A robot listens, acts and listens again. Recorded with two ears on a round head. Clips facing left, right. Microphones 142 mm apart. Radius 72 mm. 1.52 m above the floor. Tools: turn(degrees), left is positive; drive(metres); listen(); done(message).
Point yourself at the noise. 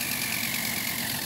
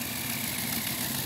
listen()
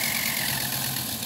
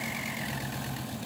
listen()
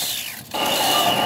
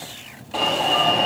turn(degrees=30)
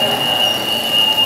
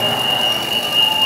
turn(degrees=145)
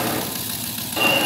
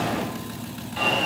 turn(degrees=50)
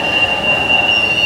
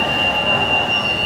turn(degrees=20)
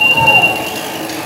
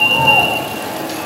turn(degrees=10)
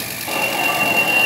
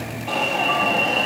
done("Found it: an alarm, straight ahead.")